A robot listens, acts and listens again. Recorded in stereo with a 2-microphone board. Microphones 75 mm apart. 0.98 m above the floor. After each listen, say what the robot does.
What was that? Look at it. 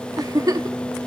Turn 55° right.
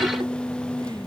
Keep listening.
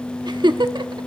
Turn 70° right.
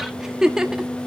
Facing the giggle, 1 to 2 m away.